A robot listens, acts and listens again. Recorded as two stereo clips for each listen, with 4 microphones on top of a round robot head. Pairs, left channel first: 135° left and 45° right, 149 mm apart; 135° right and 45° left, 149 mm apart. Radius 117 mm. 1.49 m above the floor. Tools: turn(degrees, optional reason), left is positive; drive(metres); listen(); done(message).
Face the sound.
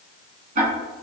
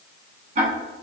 done("Facing the ticking, 1 to 2 m away.")